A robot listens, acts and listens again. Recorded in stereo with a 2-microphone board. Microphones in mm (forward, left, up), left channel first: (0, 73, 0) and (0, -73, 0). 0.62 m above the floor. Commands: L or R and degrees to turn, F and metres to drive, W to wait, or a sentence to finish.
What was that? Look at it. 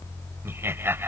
R15
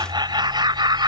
R145
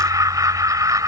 R25
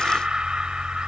Found it: laughter, straight ahead.